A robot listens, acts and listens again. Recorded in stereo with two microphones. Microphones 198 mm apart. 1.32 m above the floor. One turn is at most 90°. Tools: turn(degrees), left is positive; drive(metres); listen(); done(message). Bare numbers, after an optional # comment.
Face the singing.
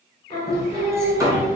# The singing: about 35° left or 145° left.
turn(35)
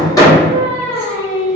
# The singing: about 40° left or 140° left.
turn(40)
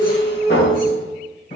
# The singing: about 40° left or 140° left.
turn(40)
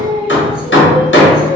# The singing: about 30° left or 150° left.
turn(30)
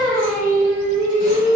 done("Facing the singing.")